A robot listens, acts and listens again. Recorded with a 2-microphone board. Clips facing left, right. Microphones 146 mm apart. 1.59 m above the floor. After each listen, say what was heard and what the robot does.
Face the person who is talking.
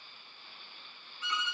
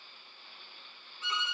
Keep listening.
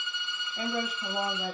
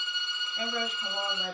Turn 30° left.
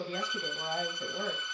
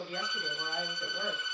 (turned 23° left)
So it is at 150° left. Turn 150° left.
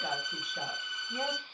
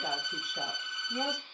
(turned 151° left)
Found it: a woman speaking, straight ahead, 1 to 2 m away.